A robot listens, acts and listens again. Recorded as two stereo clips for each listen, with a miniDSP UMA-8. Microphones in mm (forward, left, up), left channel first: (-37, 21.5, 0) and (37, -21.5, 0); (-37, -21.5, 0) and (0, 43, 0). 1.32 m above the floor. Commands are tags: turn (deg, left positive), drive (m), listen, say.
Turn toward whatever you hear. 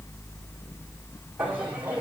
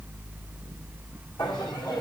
<turn deg="-105"/>
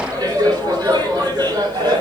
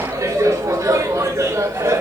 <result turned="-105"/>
<say>Found it: laughter, straight ahead.</say>